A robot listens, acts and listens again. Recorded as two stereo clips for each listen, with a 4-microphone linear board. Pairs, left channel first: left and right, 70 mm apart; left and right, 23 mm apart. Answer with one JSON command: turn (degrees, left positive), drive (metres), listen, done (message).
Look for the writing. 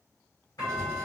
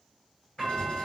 {"turn": 60}
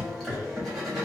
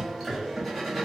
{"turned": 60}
{"done": "Facing the writing."}